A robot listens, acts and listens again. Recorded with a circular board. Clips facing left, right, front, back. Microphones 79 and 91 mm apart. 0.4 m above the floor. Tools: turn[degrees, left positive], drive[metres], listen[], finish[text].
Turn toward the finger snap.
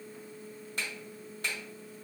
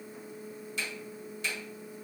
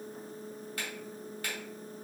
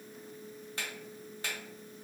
Thought: The finger snap: 120° left.
Action: turn[120]
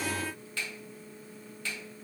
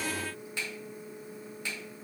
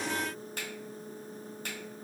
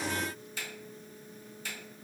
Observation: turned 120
Thought: The finger snap is now 25° right.
Action: turn[-25]
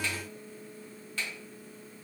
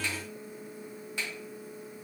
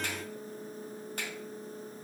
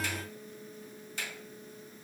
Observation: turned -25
Thought: The finger snap is now 25° right.
Action: turn[-25]
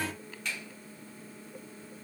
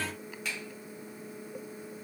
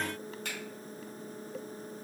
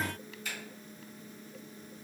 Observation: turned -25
Action: finish[Found it: a finger snap, straight ahead.]